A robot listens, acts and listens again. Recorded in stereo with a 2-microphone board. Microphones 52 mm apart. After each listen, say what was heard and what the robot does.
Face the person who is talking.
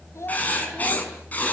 The child speaking: about 65° left or 115° left. Turn 65° left.
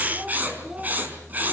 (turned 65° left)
So it is at 10° right. Turn 10° right.
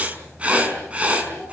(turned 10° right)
Keep listening.
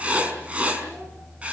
Keep listening.
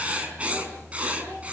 I heard a child speaking from this way, but can't make it out now.